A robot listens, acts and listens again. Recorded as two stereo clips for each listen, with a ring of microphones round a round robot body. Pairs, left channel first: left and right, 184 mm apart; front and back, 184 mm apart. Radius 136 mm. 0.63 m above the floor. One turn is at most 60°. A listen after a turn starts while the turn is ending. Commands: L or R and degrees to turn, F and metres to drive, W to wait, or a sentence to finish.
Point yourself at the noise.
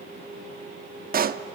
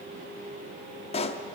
R60
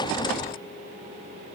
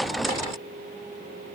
I heard a pop from this way, but can't make it out now.